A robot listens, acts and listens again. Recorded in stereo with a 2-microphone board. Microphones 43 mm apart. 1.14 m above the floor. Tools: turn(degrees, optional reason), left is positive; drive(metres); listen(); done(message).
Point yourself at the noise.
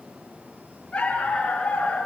turn(degrees=25, reason="The dog barking: about 25° left or 155° left.")
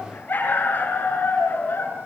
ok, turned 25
turn(degrees=125, reason="So it is at 125° left.")
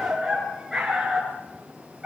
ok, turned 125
turn(degrees=-10, reason="The dog barking is now 10° right.")
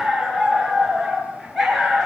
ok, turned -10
done("Facing the dog barking, over 4 m away.")